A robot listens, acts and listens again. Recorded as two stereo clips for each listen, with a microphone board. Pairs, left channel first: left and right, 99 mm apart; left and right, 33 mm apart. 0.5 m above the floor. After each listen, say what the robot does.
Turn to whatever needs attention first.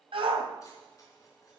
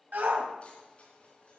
Turn 70° right.
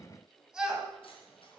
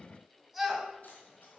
Facing the shout, 2 to 4 m away.